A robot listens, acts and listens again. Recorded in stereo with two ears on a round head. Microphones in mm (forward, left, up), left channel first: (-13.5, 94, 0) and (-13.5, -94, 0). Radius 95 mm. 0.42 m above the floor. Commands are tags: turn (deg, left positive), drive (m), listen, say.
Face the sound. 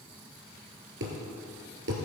<turn deg="-60"/>
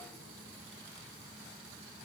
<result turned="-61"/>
<listen/>
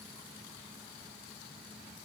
<say>I heard a thud, but can't make it out now. It was about 5° left or 60° right.</say>